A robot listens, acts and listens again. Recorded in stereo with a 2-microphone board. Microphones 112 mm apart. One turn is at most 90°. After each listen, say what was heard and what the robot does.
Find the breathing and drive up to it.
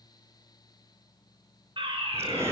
The breathing: about 25° right or 155° right. Turn 25° right.
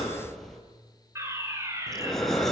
Drive 1.0 m forward.
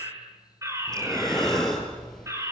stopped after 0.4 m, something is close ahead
Blocked. The breathing is further on, straight ahead.